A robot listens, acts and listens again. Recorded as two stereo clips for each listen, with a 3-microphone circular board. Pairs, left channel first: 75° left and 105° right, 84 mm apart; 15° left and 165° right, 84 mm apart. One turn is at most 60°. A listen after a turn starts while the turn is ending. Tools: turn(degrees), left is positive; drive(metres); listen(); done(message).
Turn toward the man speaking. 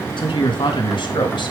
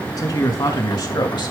turn(degrees=50)
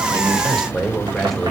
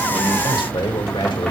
turn(degrees=-15)
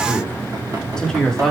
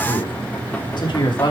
turn(degrees=-10)
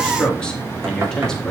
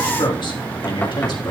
turn(degrees=-10)
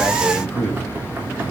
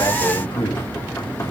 done("Facing the man speaking.")